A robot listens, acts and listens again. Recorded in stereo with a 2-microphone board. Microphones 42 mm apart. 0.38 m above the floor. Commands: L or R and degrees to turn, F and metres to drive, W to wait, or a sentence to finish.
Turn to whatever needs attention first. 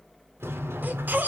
R50
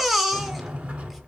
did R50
Found it: a baby crying, straight ahead.